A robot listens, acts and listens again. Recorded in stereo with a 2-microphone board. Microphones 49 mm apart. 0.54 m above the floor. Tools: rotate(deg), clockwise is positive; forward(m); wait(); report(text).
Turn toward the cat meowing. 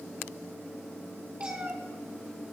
rotate(25)
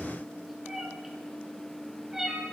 rotate(30)
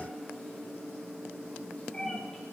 rotate(-15)
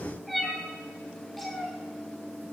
report("Facing the cat meowing, 2 to 4 m away.")